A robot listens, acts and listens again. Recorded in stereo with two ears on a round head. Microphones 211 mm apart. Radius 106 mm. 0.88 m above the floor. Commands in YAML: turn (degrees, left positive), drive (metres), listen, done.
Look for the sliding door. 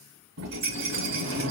turn: -55
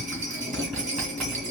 done: "Found it: a sliding door, straight ahead, 2 to 4 m away."